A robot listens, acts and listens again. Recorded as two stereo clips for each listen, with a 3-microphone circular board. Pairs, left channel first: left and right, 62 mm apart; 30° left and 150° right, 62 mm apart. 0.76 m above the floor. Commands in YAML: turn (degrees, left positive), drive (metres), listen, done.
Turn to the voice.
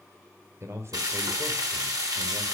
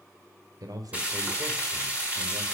turn: -135
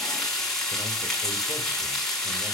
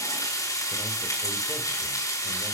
listen: true
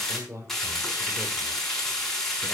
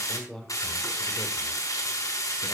turn: -50
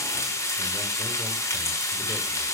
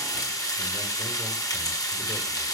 listen: true
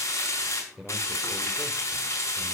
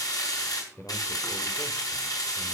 turn: -10
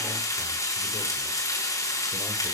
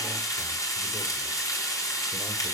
listen: true
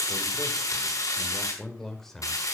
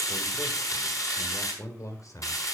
done: "Found it: a man speaking, straight ahead."